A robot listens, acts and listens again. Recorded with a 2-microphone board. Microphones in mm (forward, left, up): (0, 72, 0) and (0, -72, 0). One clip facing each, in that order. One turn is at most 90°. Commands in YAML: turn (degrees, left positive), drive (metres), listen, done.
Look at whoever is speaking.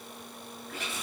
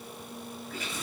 listen: true
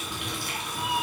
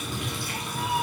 listen: true
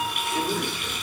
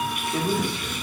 turn: -60
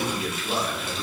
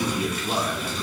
turn: -15
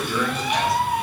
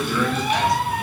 done: "Facing the man speaking, 1 to 2 m away."